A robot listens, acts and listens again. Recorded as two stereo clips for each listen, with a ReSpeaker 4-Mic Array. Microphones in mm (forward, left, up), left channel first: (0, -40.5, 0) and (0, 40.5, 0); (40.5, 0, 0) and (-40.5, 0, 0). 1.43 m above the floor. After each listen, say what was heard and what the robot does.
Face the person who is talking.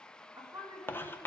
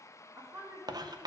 The woman speaking: 130° left. Turn 130° left.
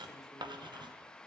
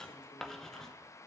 Keep listening.
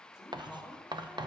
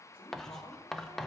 Found it: a woman speaking, straight ahead.